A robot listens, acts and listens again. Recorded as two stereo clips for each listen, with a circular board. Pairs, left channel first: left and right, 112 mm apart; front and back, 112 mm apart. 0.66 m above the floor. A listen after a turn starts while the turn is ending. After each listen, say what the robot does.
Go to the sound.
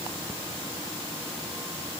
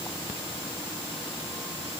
Keep listening.
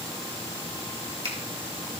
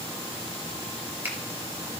Turn 105° right.
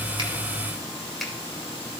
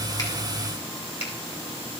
Drive 1.0 m forward.
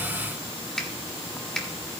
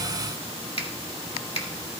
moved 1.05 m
Drive 1.0 m forward.
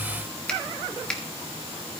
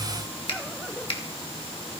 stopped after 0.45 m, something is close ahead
Turn 10° left.
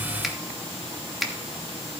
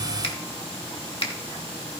Arrived at the finger snap, straight ahead.